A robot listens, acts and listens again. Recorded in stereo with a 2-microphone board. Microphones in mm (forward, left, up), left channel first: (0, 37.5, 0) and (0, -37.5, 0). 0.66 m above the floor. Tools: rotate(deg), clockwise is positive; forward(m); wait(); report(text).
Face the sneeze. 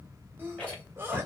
rotate(30)
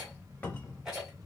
wait()
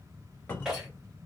report("I heard a sneeze, but can't make it out now. It was about straight ahead or 120° right.")